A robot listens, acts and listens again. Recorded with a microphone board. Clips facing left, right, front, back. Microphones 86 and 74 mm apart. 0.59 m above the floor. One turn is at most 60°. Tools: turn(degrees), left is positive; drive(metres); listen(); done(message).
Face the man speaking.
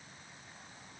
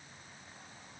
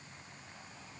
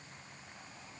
listen()
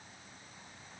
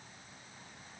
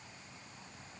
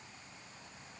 listen()
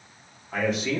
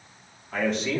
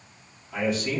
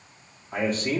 turn(degrees=-60)
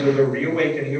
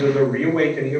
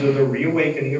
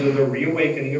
turn(degrees=-60)
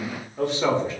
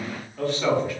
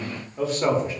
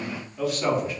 turn(degrees=40)
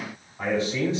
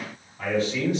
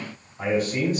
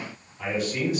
turn(degrees=35)
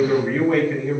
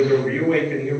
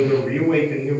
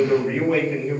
turn(degrees=20)
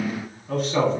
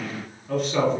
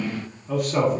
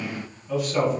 done("Found it: a man speaking, straight ahead, 1 to 2 m away.")